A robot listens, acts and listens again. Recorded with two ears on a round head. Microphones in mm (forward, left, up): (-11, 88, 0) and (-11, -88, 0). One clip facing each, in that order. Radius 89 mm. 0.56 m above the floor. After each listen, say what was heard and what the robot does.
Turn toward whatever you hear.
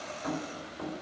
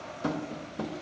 The tapping: about 60° right or 120° right. Turn 60° right.
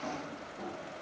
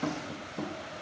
So it is at 65° right. Turn 65° right.
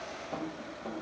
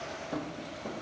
The tapping is now 10° right. Turn 10° right.
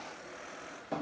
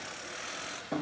Facing the tapping, under 1 m away.